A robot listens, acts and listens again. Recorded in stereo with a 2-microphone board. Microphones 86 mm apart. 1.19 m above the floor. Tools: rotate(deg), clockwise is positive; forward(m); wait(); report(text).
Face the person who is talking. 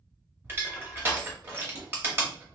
wait()
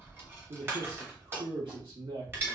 rotate(65)
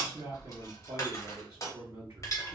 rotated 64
rotate(50)
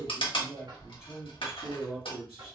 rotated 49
report("Found it: a man speaking, straight ahead.")